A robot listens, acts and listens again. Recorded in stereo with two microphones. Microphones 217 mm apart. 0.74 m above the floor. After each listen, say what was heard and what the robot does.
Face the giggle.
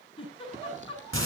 The giggle: about 25° left or 155° left. Turn 25° left.
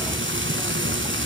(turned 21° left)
Keep listening.
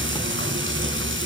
Keep listening.
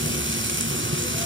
I heard a giggle, but can't make it out now. It was about 5° left or 135° left.